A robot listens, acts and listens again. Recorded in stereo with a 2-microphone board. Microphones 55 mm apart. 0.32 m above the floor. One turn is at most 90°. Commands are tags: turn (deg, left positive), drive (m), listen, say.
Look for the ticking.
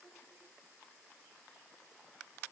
<listen/>
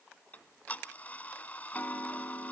<turn deg="30"/>
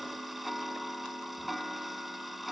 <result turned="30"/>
<say>Found it: ticking, straight ahead, 1 to 2 m away.</say>